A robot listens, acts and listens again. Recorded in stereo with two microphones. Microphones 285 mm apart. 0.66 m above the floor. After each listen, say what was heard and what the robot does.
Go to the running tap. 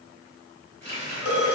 The running tap: about 40° left or 140° left. Turn 40° left.
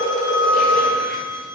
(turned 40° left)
Keep listening.
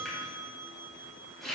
Drive 1.0 m forward.
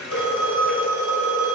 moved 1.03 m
Drive 1.0 m forward.
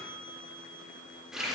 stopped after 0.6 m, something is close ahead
I am next to the running tap.